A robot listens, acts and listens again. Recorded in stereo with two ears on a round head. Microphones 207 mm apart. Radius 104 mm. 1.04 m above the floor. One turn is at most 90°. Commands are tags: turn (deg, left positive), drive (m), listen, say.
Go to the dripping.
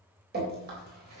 <turn deg="-45"/>
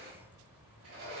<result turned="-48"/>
<listen/>
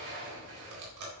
<turn deg="-90"/>
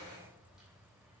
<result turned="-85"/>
<listen/>
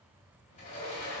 <listen/>
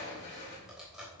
<drive m="1.0"/>
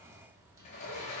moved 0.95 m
<listen/>
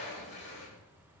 <listen/>
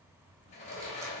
<say>Facing where the dripping came from. I can't hear it now. I did not reach it.</say>